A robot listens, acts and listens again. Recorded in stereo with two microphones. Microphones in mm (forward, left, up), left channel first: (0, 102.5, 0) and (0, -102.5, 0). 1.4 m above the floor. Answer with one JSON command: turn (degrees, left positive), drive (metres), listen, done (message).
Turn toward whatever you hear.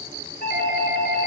{"turn": 50}
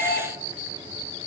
{"turn": 85}
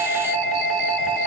{"done": "Found it: a doorbell, straight ahead."}